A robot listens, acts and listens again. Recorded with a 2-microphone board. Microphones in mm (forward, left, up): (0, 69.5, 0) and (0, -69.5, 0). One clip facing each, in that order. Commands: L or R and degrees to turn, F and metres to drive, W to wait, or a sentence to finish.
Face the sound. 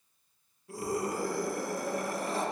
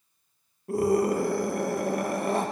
R60
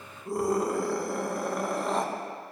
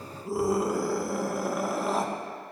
Found it: a scream, straight ahead.